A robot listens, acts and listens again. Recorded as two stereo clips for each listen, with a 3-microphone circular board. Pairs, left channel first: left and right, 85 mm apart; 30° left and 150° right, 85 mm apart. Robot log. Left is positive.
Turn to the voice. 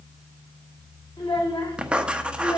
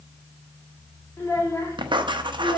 note: The child speaking: 65° left.
cmd yaw +65
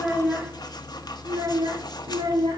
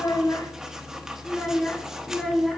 note: The child speaking is now 60° right.
cmd yaw -60
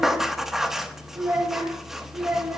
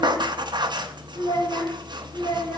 note: The child speaking is now 20° right.
cmd yaw -20
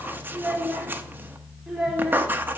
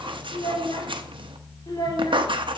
end: Found it: a child speaking, straight ahead, 2 to 4 m away.